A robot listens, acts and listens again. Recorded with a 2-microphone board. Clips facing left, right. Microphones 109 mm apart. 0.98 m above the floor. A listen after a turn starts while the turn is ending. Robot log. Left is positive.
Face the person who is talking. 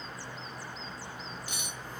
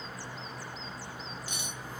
cmd idle
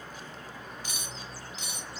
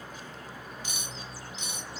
cmd idle
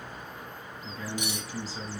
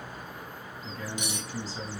cmd yaw +30
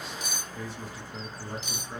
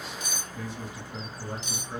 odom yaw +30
note: So it is at 20° right.
cmd yaw -20
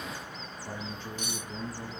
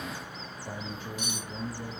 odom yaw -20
end: Found it: a man speaking, straight ahead, 1 to 2 m away.